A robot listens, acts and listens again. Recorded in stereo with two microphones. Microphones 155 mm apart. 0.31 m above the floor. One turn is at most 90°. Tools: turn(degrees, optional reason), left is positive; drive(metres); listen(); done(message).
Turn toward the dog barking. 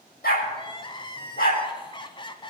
turn(degrees=65, reason="The dog barking: about 65° left or 115° left.")
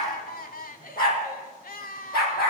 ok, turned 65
turn(degrees=80, reason="So it is at 80° left.")
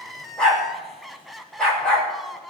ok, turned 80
done("Facing the dog barking.")